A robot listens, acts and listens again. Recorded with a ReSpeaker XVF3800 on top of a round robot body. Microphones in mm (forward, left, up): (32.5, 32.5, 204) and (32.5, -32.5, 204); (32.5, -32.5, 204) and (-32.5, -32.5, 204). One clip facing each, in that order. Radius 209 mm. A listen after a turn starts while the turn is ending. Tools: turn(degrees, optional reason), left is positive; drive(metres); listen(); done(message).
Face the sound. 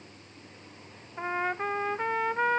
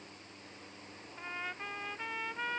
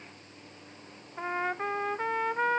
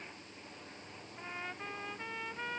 turn(degrees=45, reason="The trumpet: 45° left.")
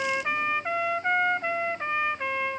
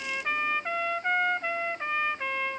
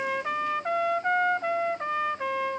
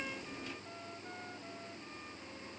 done("Found it: a trumpet, straight ahead.")